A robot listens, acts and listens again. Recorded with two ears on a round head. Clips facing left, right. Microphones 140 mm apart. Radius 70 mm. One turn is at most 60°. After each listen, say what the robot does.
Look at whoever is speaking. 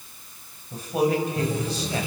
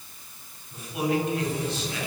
Turn 35° left.
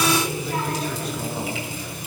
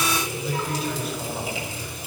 Found it: a man speaking, straight ahead.